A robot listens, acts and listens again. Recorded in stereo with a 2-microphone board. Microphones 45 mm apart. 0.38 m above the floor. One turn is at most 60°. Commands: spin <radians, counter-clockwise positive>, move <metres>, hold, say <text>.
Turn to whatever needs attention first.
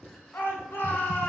spin 1.05
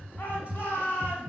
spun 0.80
spin 0.87
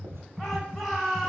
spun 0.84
say Facing the shout.